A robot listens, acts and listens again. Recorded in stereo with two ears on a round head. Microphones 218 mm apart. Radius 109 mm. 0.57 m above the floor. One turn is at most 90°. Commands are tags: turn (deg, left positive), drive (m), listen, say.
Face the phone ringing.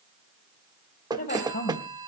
<turn deg="-15"/>
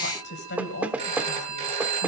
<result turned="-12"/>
<turn deg="-90"/>
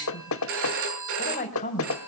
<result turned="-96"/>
<turn deg="-55"/>
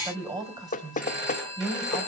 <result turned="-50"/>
<say>Facing the phone ringing.</say>